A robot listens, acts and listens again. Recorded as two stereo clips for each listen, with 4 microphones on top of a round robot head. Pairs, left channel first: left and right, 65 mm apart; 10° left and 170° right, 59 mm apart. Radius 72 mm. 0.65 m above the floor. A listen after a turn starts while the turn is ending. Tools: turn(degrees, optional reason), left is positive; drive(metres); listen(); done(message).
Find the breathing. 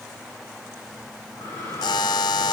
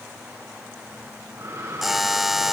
turn(degrees=150, reason="The breathing: 150° left.")
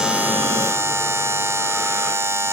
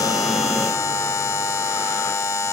listen()
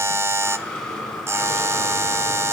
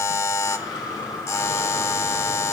turn(degrees=10, reason="The breathing is now 10° left.")
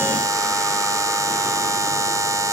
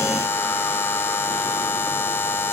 listen()
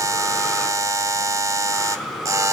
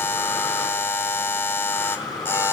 done("Facing the breathing, 2 to 4 m away.")